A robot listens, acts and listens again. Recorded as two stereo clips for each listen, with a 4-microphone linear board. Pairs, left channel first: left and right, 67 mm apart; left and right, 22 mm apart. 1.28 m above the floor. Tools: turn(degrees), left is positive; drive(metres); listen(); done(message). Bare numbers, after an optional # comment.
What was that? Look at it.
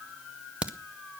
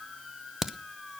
# The crack: about 20° right or 160° right.
turn(-20)
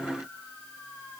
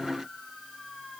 listen()
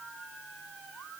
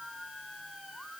done("I heard a crack, but can't make it out now. It was about straight ahead or 140° right.")